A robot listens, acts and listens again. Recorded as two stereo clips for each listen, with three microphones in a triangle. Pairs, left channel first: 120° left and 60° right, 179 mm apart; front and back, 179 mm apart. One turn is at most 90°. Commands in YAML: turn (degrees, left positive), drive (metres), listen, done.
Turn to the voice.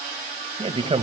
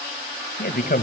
turn: -10
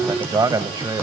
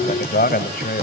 done: "Facing the man speaking."